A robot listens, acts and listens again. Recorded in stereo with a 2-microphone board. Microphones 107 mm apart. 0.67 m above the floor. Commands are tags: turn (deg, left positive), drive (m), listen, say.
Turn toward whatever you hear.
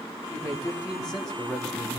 <turn deg="35"/>
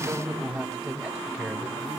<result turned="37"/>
<say>Facing the man speaking, over 4 m away.</say>